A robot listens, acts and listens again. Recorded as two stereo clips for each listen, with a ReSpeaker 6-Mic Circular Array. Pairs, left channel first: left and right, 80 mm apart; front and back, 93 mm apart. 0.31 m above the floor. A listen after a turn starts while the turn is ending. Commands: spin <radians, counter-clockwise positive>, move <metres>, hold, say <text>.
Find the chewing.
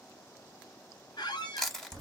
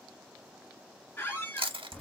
spin 3.05
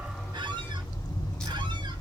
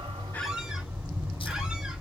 hold
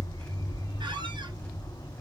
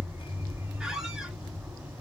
hold
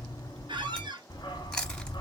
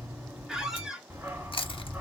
say I heard chewing from this way, but can't make it out now.